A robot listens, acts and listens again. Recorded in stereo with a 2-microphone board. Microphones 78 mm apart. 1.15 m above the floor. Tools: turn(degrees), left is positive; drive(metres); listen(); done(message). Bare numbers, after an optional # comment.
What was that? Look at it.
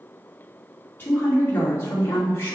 # The woman speaking: about 35° left or 145° left.
turn(35)
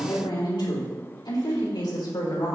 # So it is at 95° left.
turn(95)
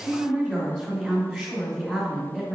done("Found it: a woman speaking, straight ahead.")